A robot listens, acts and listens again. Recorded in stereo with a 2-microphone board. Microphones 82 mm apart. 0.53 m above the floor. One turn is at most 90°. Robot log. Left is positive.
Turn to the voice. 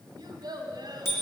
note: The child speaking: about 60° right or 120° right.
cmd yaw -60
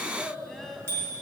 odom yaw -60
end: Facing the child speaking.